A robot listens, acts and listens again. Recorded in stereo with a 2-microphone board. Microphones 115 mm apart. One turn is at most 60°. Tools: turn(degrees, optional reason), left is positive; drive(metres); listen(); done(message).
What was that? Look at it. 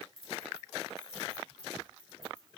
turn(degrees=35, reason="The keys jangling: about 35° left or 145° left.")
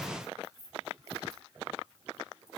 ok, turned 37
done("Found it: keys jangling, straight ahead.")